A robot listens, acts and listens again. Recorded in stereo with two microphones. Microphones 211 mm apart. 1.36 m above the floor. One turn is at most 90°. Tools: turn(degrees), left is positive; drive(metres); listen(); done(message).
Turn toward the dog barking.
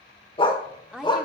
turn(degrees=20)
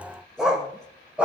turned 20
done("Facing the dog barking.")